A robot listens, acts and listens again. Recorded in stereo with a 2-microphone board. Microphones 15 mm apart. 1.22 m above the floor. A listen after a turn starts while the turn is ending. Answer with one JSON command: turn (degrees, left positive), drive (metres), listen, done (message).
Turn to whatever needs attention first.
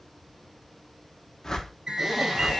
{"turn": -45}
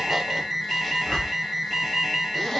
{"done": "Found it: an alarm, straight ahead, 2 to 4 m away."}